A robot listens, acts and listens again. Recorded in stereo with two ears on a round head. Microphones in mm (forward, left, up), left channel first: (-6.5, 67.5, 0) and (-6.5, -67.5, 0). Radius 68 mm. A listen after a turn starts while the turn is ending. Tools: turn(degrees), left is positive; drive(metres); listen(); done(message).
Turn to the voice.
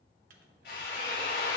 listen()
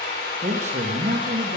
turn(degrees=-50)
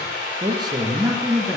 turn(degrees=-10)
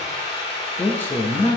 turn(degrees=20)
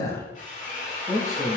turn(degrees=20)
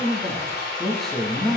done("Facing the man speaking.")